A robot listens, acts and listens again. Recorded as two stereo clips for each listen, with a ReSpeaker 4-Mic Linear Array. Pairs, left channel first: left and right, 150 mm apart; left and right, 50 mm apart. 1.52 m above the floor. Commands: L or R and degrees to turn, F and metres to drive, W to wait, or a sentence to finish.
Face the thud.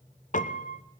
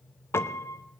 W
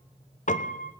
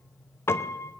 W
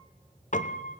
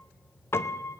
I can't make out a thud to turn to.